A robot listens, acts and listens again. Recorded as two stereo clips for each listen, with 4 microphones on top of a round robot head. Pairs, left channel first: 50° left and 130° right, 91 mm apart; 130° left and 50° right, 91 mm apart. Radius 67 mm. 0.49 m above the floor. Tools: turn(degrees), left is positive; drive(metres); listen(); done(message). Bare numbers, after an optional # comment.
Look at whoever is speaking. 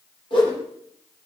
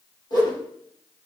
listen()
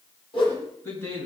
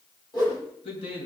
# The man speaking: 115° left.
turn(115)
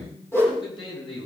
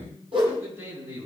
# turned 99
# The man speaking is now 15° left.
turn(15)
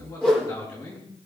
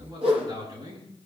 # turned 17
done("Facing the man speaking, over 4 m away.")